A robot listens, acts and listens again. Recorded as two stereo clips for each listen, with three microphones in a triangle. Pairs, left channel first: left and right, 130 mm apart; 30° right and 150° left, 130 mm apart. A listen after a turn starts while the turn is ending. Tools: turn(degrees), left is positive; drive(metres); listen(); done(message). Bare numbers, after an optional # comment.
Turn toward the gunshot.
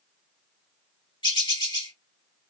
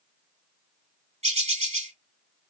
listen()
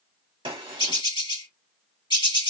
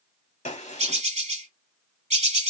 # The gunshot: 45° right.
turn(-45)
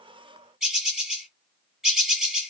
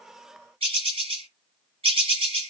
done("I heard a gunshot from this way, but can't make it out now.")